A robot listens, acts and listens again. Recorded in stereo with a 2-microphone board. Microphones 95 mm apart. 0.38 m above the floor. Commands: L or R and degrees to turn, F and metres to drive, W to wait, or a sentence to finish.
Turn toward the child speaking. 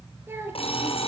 R25
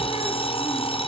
W
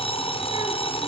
W
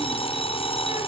I heard a child speaking, but can't make it out now. It was about straight ahead or 130° right.